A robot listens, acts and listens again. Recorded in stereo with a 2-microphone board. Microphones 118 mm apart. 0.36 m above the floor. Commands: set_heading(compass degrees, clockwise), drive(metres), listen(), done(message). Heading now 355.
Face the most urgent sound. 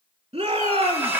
set_heading(55)
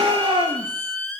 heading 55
set_heading(105)
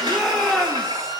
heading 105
done("Found it: a shout, straight ahead, 2 to 4 m away.")